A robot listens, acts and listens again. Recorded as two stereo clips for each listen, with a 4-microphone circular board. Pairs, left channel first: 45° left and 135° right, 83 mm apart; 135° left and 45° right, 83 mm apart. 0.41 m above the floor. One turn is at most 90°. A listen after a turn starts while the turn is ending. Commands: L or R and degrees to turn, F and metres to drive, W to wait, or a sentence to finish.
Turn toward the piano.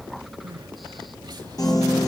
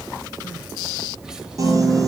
Found it: a piano, straight ahead.